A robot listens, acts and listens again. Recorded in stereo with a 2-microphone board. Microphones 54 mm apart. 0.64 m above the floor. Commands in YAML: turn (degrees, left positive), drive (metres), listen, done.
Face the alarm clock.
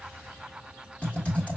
listen: true
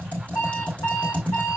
turn: 90
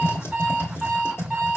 turn: -10
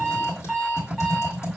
done: "Found it: an alarm clock, straight ahead."